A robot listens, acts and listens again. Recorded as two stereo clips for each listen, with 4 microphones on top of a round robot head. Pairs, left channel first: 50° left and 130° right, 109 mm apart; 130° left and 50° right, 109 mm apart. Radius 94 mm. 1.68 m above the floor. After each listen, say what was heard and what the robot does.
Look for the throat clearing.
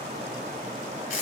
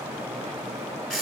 Keep listening.
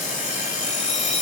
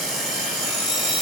Keep listening.
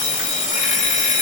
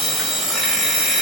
I can't make out throat clearing to turn to.